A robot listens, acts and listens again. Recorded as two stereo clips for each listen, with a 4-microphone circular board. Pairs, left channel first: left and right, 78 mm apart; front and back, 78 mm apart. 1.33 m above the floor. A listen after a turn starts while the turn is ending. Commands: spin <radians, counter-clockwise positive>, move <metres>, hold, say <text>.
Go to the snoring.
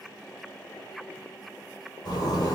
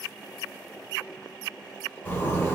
hold
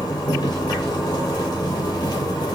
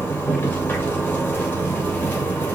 hold
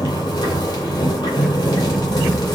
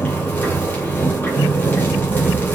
say I can't make out snoring, only a zipper.